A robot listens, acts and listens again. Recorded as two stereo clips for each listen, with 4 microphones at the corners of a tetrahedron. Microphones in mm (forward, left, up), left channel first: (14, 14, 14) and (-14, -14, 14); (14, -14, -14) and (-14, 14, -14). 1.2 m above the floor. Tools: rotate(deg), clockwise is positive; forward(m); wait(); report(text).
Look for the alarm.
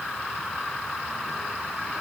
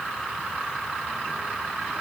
wait()
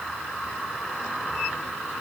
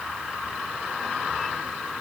wait()
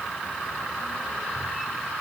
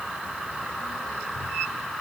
report("I can't make out an alarm.")